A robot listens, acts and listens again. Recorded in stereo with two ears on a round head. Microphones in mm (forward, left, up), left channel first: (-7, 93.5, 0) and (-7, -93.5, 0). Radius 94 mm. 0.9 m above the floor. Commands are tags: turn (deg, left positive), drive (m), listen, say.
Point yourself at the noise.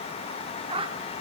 <turn deg="-25"/>
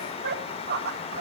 <turn deg="-130"/>
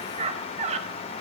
<turn deg="-30"/>
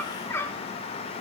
<turn deg="10"/>
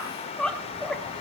<say>Found it: a squeak, straight ahead.</say>